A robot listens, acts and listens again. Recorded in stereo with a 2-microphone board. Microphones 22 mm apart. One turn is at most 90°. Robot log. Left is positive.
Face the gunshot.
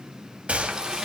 note: The gunshot: about 75° right or 105° right.
cmd yaw -75
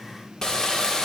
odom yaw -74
cmd idle
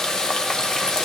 end: I heard a gunshot, but can't make it out now. It was about straight ahead or 35° right.